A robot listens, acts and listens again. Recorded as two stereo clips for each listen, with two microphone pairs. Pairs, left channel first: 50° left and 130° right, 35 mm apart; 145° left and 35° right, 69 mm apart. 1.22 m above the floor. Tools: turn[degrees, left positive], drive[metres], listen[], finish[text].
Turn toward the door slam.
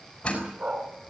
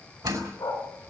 Thought: The door slam: 15° right.
Action: turn[-15]
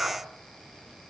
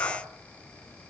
Action: finish[Facing where the door slam came from. I can't hear it now.]